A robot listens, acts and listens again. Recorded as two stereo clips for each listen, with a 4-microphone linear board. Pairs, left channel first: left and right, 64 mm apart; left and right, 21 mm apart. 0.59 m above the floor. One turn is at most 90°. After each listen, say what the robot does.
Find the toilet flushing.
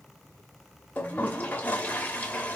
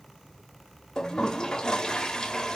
Turn 25° left.
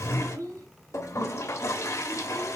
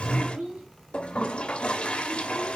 Turn 90° left.
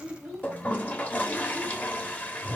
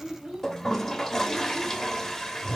Turn 25° left.
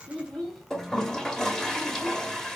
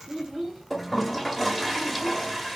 Turn 10° left.
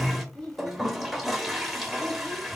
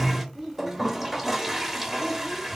Facing the toilet flushing, 1 to 2 m away.